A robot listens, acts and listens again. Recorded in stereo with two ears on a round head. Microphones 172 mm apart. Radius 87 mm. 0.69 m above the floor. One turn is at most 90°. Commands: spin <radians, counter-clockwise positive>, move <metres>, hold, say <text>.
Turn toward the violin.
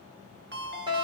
hold
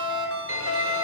spin -1.57
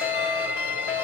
spin -0.17
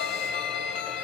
say Facing the violin, 1 to 2 m away.